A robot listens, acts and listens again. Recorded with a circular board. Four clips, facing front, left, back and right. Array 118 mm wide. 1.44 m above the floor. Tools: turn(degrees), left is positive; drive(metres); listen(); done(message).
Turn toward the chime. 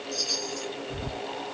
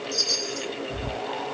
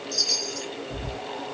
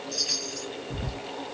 turn(degrees=-125)
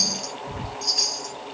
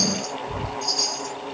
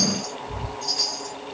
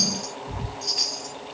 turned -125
turn(degrees=-35)
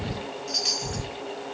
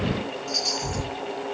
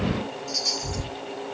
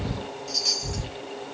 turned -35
done("Found it: a chime, straight ahead, 1 to 2 m away.")